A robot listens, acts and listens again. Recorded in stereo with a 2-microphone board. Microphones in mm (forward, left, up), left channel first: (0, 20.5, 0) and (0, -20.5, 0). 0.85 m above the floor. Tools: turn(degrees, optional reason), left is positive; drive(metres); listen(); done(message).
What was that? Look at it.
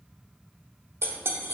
turn(degrees=-90)
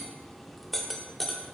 done("Facing the cutlery clinking, under 1 m away.")